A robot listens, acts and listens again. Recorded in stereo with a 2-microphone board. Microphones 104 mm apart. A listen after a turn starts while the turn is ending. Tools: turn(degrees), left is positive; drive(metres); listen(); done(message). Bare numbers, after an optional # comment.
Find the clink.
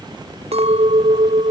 turn(-90)
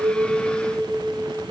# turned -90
done("Facing the clink.")